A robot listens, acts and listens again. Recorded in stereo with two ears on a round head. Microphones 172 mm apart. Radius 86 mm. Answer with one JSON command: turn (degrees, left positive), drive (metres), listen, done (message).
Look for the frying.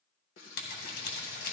{"turn": 70}
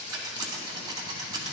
{"listen": true}
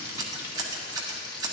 {"turn": 25}
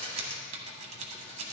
{"listen": true}
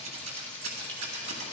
{"turn": 10}
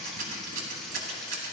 {"listen": true}
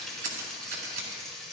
{"done": "Found it: frying, straight ahead."}